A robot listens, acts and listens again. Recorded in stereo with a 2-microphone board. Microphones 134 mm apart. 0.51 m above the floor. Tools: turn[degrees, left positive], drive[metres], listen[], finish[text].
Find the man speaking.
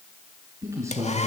Thought: The man speaking: about 20° right or 160° right.
Action: turn[-20]
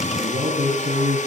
Thought: The man speaking: about 30° right or 150° right.
Action: turn[-30]
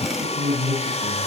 Thought: So it is at 120° right.
Action: turn[-120]
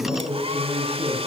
Thought: The man speaking is now 15° right.
Action: turn[-15]
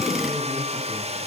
Action: listen[]
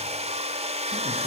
Action: listen[]
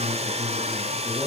Thought: The man speaking is now 10° right.
Action: turn[-10]
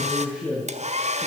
Action: finish[Found it: a man speaking, straight ahead, over 4 m away.]